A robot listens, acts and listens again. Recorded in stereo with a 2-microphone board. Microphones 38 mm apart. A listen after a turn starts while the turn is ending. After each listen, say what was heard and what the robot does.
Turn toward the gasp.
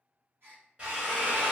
Turn 90° right.
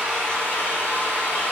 Facing where the gasp came from. I can't hear it now.